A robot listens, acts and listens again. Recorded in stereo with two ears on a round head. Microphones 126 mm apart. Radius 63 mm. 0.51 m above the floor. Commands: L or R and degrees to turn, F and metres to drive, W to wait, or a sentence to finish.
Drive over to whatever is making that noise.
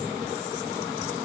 W
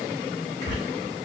L25
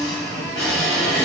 F1.0
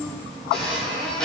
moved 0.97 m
F1.0
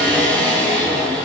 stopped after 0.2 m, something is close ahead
L10
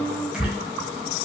I am next to the squeak.